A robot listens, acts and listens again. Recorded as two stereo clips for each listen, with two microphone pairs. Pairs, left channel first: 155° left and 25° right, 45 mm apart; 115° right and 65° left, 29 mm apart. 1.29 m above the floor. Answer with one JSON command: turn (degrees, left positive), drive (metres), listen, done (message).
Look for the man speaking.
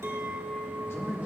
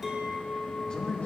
{"turn": 175}
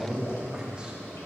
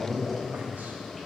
{"turn": 45}
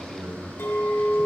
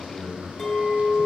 {"done": "Found it: a man speaking, straight ahead."}